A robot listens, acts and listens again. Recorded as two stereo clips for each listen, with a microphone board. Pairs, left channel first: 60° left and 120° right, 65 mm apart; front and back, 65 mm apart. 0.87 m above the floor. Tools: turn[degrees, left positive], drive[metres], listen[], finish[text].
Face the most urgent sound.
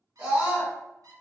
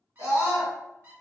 Thought: The scream: 165° left.
Action: turn[165]
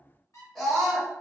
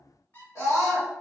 Thought: The scream is now 25° right.
Action: turn[-25]
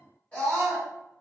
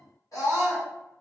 Action: finish[Found it: a scream, straight ahead.]